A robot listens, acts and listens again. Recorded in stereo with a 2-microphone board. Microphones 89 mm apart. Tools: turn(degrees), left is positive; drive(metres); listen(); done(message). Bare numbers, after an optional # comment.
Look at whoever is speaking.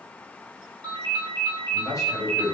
# The man speaking: about 40° left or 140° left.
turn(40)
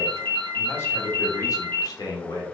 # The man speaking: about 50° left or 130° left.
turn(50)
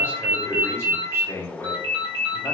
# So it is at 30° left.
turn(30)
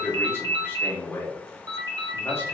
# The man speaking is now 25° left.
turn(25)
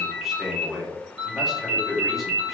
done("Found it: a man speaking, straight ahead, 1 to 2 m away.")